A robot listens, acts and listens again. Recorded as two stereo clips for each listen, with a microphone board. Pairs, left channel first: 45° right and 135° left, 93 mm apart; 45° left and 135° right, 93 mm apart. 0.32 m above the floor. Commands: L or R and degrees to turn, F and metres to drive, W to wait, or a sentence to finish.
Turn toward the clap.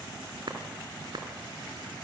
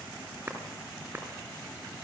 L160
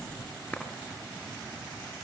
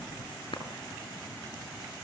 L30
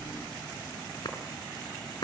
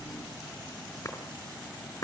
Found it: a clap, straight ahead.